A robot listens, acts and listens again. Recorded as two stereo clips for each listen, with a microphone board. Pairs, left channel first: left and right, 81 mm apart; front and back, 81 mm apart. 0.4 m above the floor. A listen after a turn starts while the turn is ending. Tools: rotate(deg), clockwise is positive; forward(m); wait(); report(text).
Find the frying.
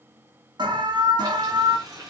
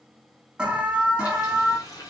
rotate(45)
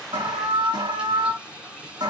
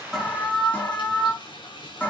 rotate(10)
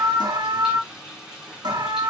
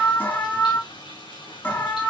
report("Found it: frying, straight ahead, over 4 m away.")